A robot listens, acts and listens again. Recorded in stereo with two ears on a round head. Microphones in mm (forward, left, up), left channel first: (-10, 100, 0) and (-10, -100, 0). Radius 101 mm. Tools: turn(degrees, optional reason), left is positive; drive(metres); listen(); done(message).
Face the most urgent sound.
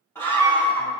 turn(degrees=30)
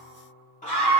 turn(degrees=140, reason="So it is at 140° left.")
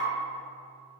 listen()
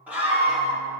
turn(degrees=-10, reason="The scream is now 10° right.")
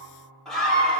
done("Facing the scream, 1 to 2 m away.")